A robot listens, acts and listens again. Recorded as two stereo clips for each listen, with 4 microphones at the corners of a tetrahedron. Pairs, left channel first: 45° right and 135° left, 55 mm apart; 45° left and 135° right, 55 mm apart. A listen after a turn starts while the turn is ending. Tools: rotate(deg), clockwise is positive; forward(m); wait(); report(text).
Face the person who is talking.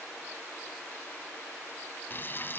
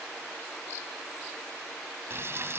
wait()
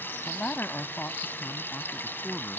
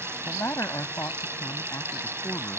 rotate(-10)
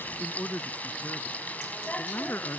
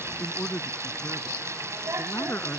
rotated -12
report("Found it: a man speaking, straight ahead.")